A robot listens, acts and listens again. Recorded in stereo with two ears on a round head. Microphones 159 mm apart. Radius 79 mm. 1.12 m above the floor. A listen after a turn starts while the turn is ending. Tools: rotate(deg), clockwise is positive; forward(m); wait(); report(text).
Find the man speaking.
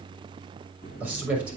rotate(30)
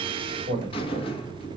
rotate(145)
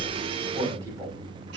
wait()
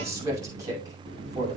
rotate(20)
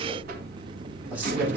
wait()
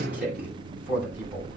rotate(10)
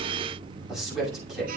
report("Facing the man speaking, over 4 m away.")